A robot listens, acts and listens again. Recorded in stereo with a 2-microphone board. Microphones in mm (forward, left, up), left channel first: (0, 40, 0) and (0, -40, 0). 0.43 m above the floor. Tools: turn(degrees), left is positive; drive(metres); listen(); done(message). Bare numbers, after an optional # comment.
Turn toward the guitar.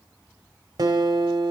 # The guitar: about 60° right or 120° right.
turn(-60)
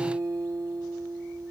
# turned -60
# So it is at 55° right.
turn(-55)
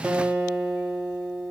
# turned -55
# The guitar is now 20° right.
turn(-20)
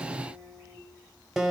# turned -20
done("Found it: a guitar, straight ahead, 1 to 2 m away.")